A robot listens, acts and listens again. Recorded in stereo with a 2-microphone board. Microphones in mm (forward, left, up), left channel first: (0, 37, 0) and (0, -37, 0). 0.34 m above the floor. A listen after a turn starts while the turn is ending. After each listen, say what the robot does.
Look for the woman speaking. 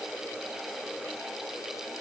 Keep listening.
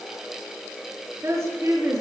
Turn 45° right.
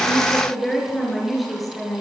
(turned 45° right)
Found it: a woman speaking, straight ahead.